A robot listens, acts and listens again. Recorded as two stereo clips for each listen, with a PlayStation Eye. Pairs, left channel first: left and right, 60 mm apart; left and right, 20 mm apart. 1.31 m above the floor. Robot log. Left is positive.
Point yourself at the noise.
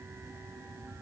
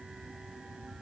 cmd idle
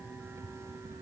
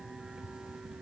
cmd idle
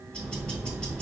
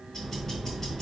note: The ticking: about 20° left or 160° left.
cmd yaw +20
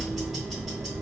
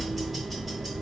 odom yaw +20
end: Found it: ticking, straight ahead, 1 to 2 m away.